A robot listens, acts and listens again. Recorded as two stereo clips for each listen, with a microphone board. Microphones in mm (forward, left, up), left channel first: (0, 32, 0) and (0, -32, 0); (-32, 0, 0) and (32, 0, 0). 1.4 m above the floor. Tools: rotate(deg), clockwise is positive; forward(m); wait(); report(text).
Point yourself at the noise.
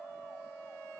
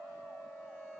wait()
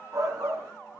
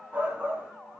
rotate(60)
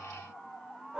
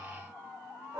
rotate(15)
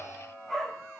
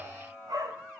report("Facing the shout, 2 to 4 m away.")